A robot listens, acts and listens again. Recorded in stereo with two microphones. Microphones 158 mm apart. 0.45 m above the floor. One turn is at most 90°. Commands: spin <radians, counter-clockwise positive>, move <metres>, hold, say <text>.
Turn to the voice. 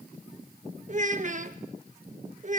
spin -0.87
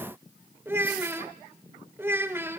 spin -0.26
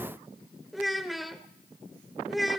say Found it: a child speaking, straight ahead.